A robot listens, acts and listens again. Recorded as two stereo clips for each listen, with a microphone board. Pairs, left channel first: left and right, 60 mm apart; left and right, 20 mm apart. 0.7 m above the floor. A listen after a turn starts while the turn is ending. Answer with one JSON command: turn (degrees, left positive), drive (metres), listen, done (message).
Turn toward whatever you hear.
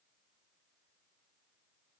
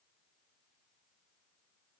{"listen": true}
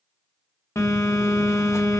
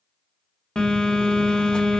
{"turn": 55}
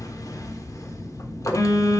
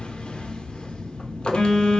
{"turn": 70}
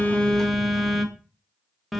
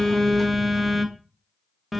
{"done": "Found it: a phone buzzing, straight ahead."}